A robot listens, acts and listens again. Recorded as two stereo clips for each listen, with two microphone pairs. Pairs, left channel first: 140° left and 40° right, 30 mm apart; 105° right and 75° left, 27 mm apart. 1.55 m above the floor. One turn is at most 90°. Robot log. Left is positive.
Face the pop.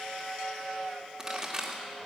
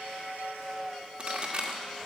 note: The pop: 30° left.
cmd yaw +30
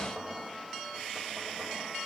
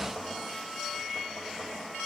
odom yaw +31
end: Facing where the pop came from. I can't hear it now.